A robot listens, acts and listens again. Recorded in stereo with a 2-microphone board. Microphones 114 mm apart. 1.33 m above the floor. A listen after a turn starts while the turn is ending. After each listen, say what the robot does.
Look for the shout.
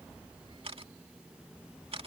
Keep listening.
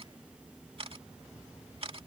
Keep listening.
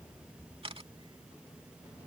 I can't make out a shout, only a camera shutter.